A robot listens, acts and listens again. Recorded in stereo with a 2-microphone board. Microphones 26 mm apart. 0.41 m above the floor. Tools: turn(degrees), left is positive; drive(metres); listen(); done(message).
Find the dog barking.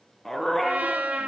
turn(degrees=30)
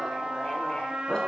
turn(degrees=150)
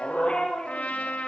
turn(degrees=40)
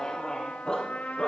turn(degrees=20)
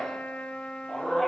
done("Found it: a dog barking, straight ahead.")